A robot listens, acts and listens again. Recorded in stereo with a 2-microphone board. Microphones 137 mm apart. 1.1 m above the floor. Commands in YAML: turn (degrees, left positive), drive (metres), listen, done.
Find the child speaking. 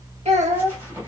turn: -65
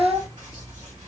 turn: -25
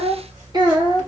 turn: -40
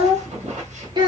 turn: -35
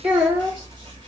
turn: -10
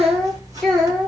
done: "Facing the child speaking, 2 to 4 m away."